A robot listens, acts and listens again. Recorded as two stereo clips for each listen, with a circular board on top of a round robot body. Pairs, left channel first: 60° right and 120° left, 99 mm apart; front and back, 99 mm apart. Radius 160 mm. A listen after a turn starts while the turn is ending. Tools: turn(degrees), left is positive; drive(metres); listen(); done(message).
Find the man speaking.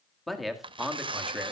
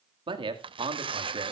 turn(degrees=-160)
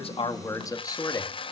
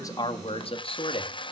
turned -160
turn(degrees=-15)
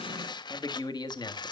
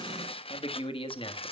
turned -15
turn(degrees=-20)
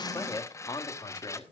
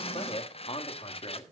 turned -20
turn(degrees=-20)
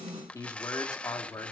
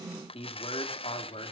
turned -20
done("Facing the man speaking, 2 to 4 m away.")